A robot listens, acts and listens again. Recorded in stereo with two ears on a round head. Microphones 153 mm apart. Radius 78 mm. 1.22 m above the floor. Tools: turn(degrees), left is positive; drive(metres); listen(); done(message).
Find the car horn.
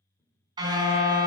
turn(degrees=-25)
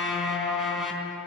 done("Facing the car horn.")